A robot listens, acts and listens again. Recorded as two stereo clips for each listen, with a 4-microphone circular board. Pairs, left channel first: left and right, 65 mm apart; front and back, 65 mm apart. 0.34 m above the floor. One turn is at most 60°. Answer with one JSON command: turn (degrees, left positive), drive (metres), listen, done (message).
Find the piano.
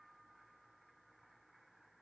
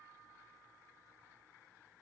{"listen": true}
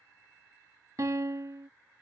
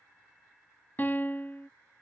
{"turn": -60}
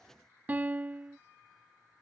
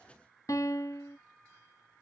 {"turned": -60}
{"turn": -25}
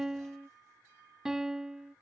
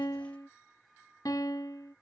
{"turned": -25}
{"turn": -10}
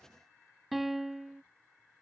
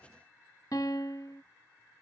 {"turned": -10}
{"done": "Found it: a piano, straight ahead."}